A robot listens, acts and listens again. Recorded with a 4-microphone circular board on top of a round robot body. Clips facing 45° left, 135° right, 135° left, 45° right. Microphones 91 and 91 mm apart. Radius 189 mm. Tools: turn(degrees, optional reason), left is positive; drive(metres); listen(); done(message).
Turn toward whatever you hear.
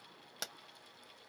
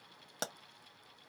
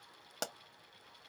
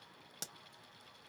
turn(degrees=170, reason="The pop: 170° left.")
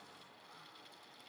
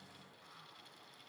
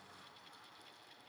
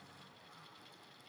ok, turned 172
done("I heard a pop from this way, but can't make it out now.")